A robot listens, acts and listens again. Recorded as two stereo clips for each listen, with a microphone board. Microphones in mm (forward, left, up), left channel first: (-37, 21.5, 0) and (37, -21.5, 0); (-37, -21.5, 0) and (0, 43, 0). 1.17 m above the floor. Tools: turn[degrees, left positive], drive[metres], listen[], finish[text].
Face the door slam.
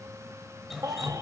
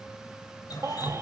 Action: listen[]
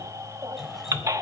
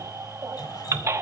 Action: listen[]
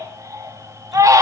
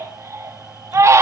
Action: finish[I can't make out a door slam to turn to.]